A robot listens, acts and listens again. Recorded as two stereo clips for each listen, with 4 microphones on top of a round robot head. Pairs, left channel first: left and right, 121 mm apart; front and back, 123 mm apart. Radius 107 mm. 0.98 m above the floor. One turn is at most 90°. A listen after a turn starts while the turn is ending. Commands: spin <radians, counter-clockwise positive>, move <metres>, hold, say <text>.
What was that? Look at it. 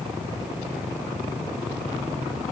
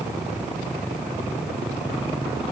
hold
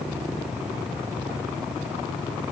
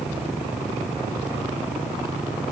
hold
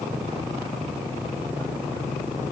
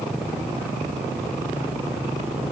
say I can't make out anything.